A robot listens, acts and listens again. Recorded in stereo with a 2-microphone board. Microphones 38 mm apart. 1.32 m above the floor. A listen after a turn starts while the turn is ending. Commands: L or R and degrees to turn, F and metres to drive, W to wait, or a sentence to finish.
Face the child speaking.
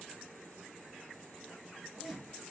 W
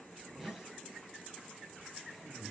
W
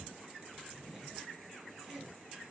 I can't make out a child speaking to turn to.